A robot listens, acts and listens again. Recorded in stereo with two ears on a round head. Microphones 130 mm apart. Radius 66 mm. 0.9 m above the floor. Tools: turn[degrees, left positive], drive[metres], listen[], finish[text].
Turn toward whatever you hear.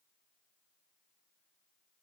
Action: listen[]
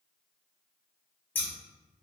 Action: turn[30]
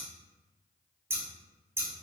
Thought: So it is at 20° right.
Action: turn[-20]
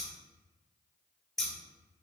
Action: finish[Found it: scissors, straight ahead.]